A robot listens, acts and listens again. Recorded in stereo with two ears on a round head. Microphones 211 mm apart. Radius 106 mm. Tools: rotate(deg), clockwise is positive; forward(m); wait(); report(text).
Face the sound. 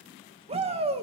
rotate(25)
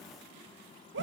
rotate(125)
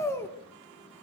rotate(-10)
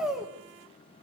report("Found it: a shout, straight ahead.")